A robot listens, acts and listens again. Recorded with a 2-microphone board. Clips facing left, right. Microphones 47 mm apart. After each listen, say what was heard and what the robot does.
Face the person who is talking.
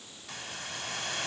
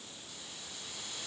Keep listening.
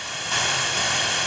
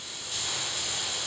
Keep listening.
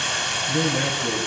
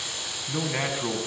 The man speaking: about 40° right or 140° right. Turn 40° right.
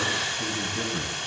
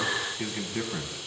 So it is at 100° right. Turn 100° right.
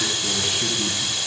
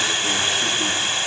Keep listening.
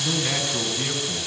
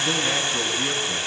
The man speaking is now 10° left. Turn 10° left.
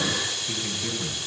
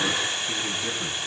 Found it: a man speaking, straight ahead.